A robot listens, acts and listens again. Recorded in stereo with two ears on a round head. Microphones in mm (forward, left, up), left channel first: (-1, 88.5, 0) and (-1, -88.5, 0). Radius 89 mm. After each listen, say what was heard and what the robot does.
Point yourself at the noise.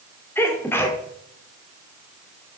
Turn 30° left.
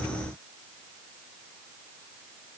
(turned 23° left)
Keep listening.
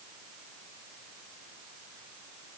I heard a sneeze, but can't make it out now. It was about 10° right or 145° left.